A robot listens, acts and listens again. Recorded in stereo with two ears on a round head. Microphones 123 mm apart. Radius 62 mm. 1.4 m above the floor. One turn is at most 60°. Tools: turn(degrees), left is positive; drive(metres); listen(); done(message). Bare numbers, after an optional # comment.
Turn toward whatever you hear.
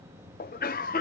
# The cough: about 70° left or 110° left.
turn(60)
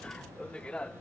# So it is at 10° left.
turn(10)
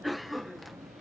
done("Found it: a cough, straight ahead.")